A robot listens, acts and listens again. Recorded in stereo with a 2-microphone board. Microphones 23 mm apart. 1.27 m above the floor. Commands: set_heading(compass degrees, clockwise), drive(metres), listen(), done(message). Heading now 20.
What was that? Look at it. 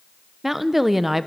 set_heading(50)
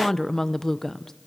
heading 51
set_heading(26)
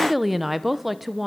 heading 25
done("Found it: a woman speaking, straight ahead, under 1 m away.")